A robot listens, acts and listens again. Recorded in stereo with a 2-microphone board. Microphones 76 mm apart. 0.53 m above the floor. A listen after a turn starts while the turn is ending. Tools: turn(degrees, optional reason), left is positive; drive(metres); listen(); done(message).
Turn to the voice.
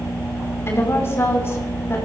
turn(degrees=35, reason="The woman speaking: about 35° left or 145° left.")
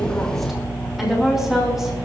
done("Found it: a woman speaking, straight ahead, over 4 m away.")